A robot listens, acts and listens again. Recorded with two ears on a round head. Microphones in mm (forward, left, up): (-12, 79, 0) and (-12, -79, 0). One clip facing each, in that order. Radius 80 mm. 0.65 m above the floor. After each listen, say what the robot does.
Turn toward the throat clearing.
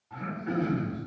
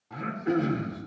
Turn 55° right.
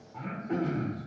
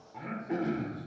Found it: throat clearing, straight ahead.